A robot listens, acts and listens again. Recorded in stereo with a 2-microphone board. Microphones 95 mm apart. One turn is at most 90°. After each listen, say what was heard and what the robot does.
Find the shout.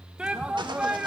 Turn 30° right.
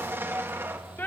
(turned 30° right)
So it is at 20° left. Turn 20° left.
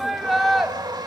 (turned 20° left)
Found it: a shout, straight ahead.